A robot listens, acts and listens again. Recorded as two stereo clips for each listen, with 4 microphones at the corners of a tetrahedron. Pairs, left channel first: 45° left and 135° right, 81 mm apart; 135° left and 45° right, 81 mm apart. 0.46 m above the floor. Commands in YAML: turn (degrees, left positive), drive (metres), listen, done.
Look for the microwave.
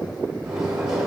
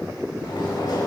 turn: 145
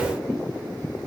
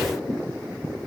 listen: true
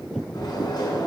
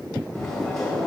turn: 55
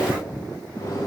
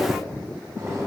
done: "Facing the microwave, 2 to 4 m away."